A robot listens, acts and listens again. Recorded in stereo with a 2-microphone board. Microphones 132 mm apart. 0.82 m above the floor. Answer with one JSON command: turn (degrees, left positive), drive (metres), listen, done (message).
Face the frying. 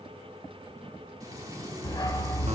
{"turn": -25}
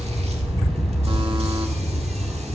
{"listen": true}
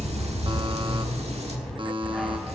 {"listen": true}
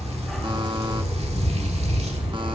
{"done": "I heard frying, but can't make it out now. It was about straight ahead or 130° right."}